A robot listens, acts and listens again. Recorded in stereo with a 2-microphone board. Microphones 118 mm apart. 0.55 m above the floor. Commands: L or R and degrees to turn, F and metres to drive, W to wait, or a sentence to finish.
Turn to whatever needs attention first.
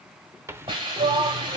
R50
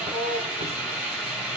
R65
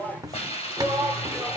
L10
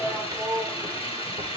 Facing the shout.